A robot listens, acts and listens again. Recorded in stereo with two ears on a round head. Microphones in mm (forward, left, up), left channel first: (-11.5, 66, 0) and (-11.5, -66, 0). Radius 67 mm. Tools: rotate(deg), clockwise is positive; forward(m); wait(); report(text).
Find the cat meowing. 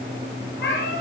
rotate(-75)
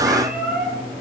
report("Found it: a cat meowing, straight ahead, over 4 m away.")